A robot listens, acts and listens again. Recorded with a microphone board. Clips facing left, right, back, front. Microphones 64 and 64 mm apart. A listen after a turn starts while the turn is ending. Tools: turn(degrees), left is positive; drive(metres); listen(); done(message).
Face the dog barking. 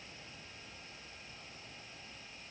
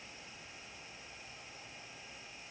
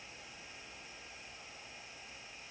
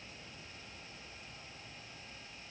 listen()
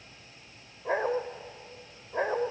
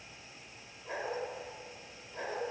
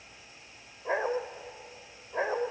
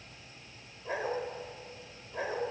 turn(degrees=125)
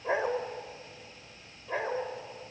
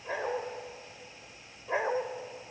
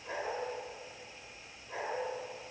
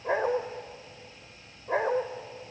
turn(degrees=-15)
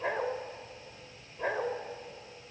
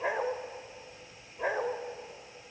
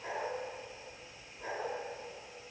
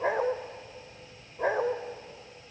turn(degrees=-10)
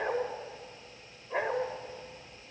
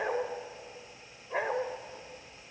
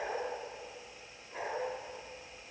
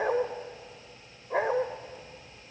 done("Found it: a dog barking, straight ahead, 1 to 2 m away.")